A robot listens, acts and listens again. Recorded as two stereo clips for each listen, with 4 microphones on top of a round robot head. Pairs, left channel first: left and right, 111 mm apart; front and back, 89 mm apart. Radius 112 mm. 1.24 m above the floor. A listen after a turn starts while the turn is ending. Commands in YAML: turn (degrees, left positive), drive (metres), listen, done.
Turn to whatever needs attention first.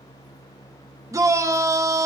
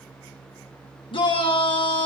turn: -30
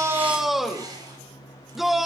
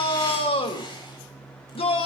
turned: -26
done: "Found it: a shout, straight ahead, 2 to 4 m away."